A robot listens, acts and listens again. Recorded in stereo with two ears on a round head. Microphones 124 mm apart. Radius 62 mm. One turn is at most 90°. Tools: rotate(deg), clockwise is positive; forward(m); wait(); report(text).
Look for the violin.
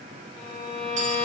rotate(-25)
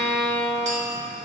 report("Found it: a violin, straight ahead, 1 to 2 m away.")